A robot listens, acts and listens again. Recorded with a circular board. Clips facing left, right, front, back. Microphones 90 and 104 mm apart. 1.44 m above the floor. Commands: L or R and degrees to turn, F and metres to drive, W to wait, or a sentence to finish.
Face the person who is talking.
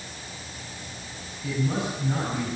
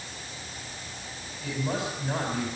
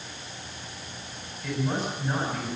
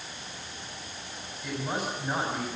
R100
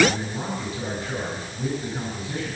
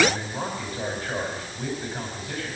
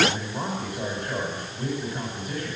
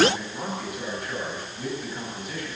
R45
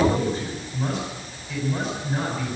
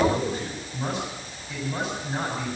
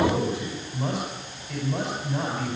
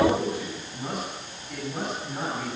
Facing the man speaking, over 4 m away.